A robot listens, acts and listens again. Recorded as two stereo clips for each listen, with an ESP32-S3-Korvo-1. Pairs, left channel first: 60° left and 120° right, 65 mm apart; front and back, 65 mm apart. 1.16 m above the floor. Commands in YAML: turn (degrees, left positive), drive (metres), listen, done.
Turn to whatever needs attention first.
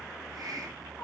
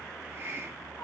listen: true
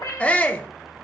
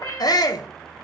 turn: -10
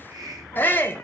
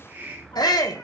done: "Found it: a shout, straight ahead, under 1 m away."